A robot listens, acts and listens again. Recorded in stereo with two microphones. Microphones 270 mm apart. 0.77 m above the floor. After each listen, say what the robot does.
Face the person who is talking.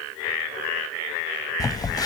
Keep listening.
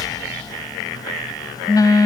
Keep listening.
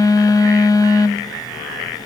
I can't make out anyone speaking, only a phone buzzing.